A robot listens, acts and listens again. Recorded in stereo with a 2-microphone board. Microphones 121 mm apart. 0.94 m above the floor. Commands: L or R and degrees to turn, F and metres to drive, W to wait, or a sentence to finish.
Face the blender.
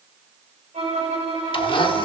L45
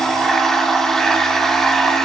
Found it: a blender, straight ahead.